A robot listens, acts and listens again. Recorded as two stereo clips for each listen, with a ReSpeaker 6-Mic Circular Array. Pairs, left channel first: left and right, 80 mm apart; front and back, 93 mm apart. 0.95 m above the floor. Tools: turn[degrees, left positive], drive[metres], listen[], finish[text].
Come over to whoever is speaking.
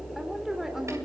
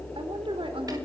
Thought: The woman speaking: 175° right.
Action: turn[-175]
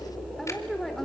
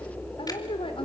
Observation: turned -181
Action: drive[1.0]
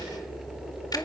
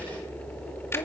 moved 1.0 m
Action: listen[]
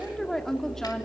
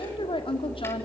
Action: drive[1.0]
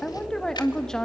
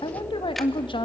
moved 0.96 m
Thought: The woman speaking is now 10° left.
Action: turn[10]
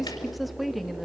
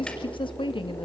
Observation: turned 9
Action: drive[1.0]
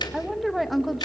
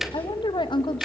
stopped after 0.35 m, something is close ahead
Action: finish[Arrived at the woman speaking, straight ahead.]